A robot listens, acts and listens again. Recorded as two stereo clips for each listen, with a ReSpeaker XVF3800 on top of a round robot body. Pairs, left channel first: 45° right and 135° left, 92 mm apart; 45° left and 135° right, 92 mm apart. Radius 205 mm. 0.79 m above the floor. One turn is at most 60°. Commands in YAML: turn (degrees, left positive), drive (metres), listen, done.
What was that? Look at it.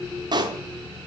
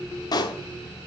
turn: 60
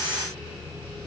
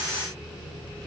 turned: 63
turn: 30
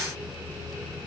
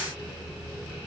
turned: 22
done: "Facing where the pop came from. I can't hear it now."